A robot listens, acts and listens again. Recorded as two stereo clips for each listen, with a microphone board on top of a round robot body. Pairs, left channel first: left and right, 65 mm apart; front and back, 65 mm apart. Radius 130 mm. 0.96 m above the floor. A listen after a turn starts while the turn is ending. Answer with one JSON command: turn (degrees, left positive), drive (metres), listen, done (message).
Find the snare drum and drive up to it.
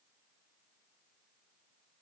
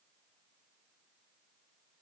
{"listen": true}
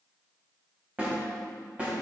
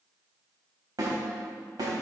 {"turn": -160}
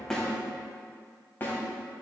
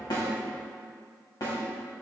{"turn": 30}
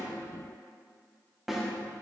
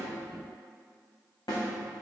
{"drive": 1.0}
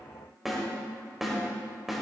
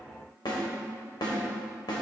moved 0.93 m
{"drive": 1.0}
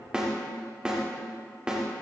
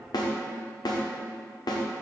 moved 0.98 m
{"turn": -15}
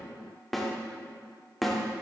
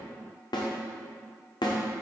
{"drive": 1.0}
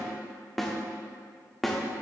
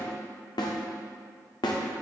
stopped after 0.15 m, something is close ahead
{"done": "Arrived at the snare drum, straight ahead."}